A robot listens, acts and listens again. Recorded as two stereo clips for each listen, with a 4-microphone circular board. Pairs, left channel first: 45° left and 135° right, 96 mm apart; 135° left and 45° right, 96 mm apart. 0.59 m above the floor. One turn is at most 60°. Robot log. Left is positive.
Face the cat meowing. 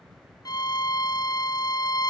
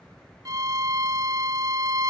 cmd idle
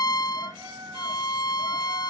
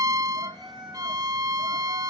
note: The cat meowing: 80° right.
cmd yaw -60
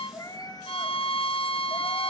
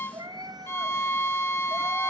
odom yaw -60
end: Found it: a cat meowing, straight ahead, 2 to 4 m away.